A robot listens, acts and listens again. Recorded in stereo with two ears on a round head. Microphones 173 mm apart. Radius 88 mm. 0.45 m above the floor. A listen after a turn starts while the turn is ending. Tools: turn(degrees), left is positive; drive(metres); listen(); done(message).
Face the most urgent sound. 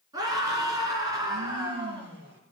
turn(degrees=-20)
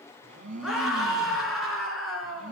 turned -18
done("Facing the scream, over 4 m away.")